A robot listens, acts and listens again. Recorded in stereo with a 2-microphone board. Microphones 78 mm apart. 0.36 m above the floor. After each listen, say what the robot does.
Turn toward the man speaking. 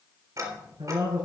Turn 75° right.
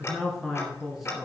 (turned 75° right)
Found it: a man speaking, straight ahead, 2 to 4 m away.